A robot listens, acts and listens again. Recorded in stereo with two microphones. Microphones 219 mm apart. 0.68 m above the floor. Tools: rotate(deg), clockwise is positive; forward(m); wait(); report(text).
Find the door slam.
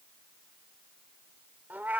wait()
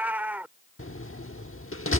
rotate(-75)
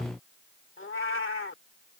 wait()
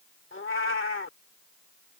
report("I heard a door slam, but can't make it out now. It was about straight ahead or 30° left.")